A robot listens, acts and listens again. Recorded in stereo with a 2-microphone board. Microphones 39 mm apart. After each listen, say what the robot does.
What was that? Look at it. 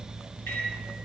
Turn 75° left.
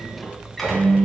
Facing the microwave.